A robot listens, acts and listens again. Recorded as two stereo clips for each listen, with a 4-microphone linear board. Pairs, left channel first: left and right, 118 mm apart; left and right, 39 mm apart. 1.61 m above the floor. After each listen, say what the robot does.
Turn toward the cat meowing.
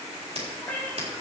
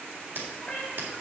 Turn 15° left.
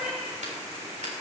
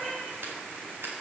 Turn 30° right.
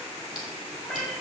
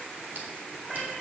Facing the cat meowing, 2 to 4 m away.